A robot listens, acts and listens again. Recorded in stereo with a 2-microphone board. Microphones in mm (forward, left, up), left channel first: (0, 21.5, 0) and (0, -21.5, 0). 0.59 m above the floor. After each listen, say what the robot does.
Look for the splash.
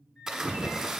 Turn 20° right.
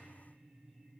Keep listening.
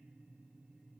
I heard a splash, but can't make it out now. It was about straight ahead or 140° right.